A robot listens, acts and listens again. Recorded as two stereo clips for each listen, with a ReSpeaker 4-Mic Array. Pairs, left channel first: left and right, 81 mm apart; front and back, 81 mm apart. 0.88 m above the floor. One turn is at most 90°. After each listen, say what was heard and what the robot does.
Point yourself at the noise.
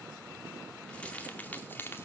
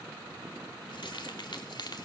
The keys jangling: 25° left. Turn 25° left.
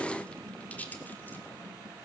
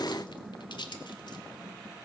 The keys jangling is now 20° left. Turn 20° left.
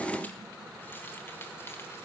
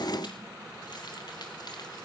Keep listening.
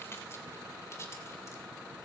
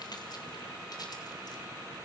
The keys jangling is now 35° left. Turn 35° left.
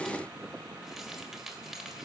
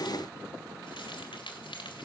Facing the keys jangling.